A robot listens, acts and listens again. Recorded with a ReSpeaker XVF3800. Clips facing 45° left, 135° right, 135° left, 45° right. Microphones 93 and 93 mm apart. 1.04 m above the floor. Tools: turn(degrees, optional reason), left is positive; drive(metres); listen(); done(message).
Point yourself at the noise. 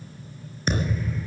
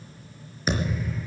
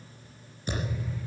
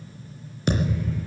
turn(degrees=-50, reason="The thud: 50° right.")
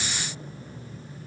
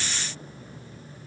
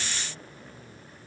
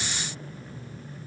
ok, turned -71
turn(degrees=25, reason="Nothing new. It was at 25° left.")
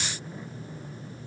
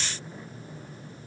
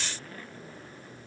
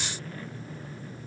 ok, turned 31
turn(degrees=-10, reason="Nothing new. It was at 10° right.")
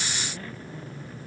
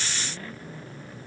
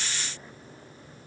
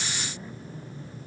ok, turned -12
done("I heard a thud from this way, but can't make it out now.")